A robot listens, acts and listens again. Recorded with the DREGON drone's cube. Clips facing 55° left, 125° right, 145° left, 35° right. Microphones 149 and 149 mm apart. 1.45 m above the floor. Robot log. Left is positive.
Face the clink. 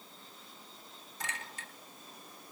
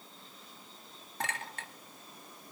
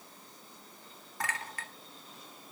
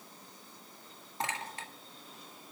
note: The clink: 100° right.
cmd yaw -100
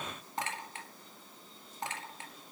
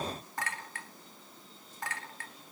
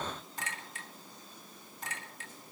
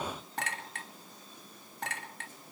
note: The clink is now 15° right.
cmd yaw -15
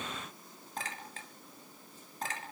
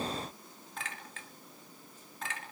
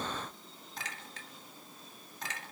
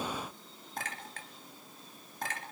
end: Found it: a clink, straight ahead.